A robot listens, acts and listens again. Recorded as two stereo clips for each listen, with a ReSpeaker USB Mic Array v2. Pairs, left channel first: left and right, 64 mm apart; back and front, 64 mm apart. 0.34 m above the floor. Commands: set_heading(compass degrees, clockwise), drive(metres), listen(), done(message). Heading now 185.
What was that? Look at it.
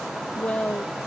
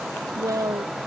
set_heading(160)
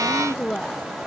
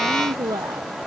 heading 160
set_heading(150)
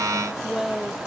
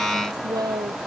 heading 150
done("Found it: a woman speaking, straight ahead.")